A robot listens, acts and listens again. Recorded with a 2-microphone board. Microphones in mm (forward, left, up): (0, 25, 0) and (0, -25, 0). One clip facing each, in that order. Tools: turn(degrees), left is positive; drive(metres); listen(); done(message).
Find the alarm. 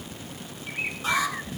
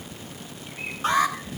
turn(degrees=-35)
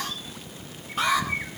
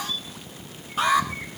done("Facing the alarm, over 4 m away.")